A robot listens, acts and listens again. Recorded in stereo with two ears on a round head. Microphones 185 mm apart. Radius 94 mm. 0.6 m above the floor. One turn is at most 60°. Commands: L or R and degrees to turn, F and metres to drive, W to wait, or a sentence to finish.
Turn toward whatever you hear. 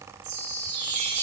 R55
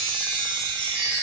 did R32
R25
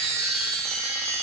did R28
Found it: a chime, straight ahead, 2 to 4 m away.